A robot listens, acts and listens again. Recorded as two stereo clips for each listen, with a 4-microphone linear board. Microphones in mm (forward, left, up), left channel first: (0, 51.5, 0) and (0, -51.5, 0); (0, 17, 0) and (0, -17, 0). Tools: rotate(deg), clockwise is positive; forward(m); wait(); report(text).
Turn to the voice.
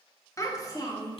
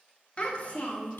rotate(-40)
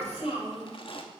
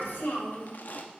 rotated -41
rotate(-95)
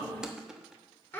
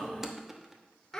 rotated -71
rotate(-20)
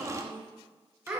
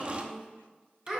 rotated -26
rotate(10)
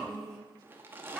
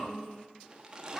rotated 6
report("Facing the child speaking.")